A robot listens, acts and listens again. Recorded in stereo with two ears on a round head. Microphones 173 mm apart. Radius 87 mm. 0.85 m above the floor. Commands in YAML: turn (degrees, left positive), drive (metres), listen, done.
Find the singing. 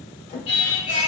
turn: 65
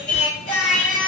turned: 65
turn: 45
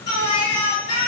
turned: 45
turn: 30
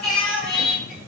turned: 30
done: "Found it: singing, straight ahead."